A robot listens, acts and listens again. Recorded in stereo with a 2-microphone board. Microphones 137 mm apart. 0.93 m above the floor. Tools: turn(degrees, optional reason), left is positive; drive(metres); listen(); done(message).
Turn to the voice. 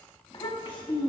turn(degrees=40, reason="The child speaking: about 40° left or 140° left.")
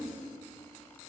listen()
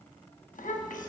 turn(degrees=100, reason="So it is at 100° left.")
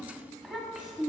done("Facing the child speaking.")